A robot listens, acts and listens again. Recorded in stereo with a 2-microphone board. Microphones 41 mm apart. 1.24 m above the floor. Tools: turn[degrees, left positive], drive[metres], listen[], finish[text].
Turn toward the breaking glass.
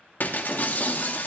Thought: The breaking glass: about 50° left or 130° left.
Action: turn[50]
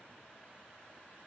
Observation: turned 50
Action: listen[]
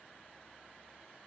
Action: finish[I heard breaking glass, but can't make it out now. It was about straight ahead or 80° left.]